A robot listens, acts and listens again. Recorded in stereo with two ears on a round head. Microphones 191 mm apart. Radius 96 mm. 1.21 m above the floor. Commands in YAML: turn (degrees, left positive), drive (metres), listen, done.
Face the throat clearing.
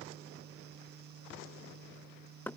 listen: true
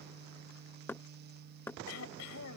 turn: 70
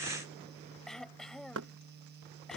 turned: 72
done: "Facing the throat clearing."